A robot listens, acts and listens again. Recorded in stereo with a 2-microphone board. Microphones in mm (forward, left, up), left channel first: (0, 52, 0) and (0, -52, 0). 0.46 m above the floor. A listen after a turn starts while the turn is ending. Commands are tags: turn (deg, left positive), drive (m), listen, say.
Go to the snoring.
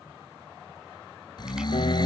<turn deg="45"/>
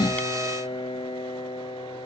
<listen/>
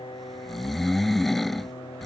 <drive m="1.0"/>
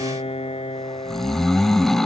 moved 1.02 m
<drive m="1.0"/>
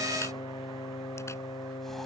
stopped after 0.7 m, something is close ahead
<listen/>
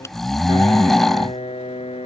<say>I am next to the snoring.</say>